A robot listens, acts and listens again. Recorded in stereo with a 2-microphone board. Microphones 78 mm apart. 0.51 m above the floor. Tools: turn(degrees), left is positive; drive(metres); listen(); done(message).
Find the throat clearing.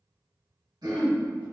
turn(degrees=-60)
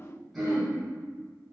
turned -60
done("Facing the throat clearing.")